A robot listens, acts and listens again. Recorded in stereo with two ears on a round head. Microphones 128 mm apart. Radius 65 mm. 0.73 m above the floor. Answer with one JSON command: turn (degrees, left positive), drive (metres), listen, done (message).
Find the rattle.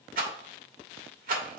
{"turn": -65}
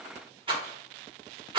{"turn": -40}
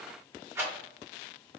{"turn": -20}
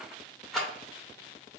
{"done": "Facing the rattle, 1 to 2 m away."}